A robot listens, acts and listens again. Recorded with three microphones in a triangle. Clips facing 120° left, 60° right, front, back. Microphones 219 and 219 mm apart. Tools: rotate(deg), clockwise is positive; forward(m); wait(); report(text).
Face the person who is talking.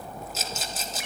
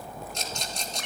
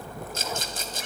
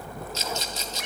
wait()
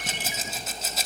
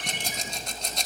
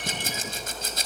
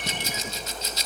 wait()
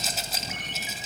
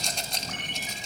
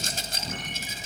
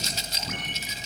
report("I can't make out anyone speaking to turn to.")